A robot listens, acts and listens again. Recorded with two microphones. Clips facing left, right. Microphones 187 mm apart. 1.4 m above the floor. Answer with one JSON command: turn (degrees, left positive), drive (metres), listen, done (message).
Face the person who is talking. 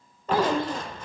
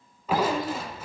{"turn": 25}
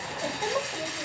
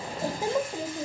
{"turn": -25}
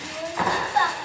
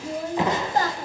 {"turn": -35}
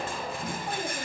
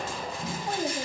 {"turn": -40}
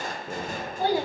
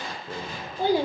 {"turn": -20}
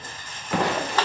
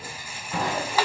{"listen": true}
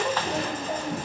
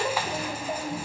{"done": "Found it: a child speaking, straight ahead."}